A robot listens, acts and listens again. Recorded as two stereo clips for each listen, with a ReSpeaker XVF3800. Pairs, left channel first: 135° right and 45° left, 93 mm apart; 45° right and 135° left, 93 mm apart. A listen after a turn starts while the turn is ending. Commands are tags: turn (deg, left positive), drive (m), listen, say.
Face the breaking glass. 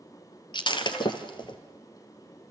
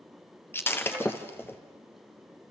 <turn deg="-110"/>
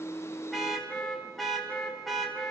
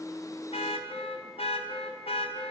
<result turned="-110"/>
<say>Facing where the breaking glass came from. I can't hear it now.</say>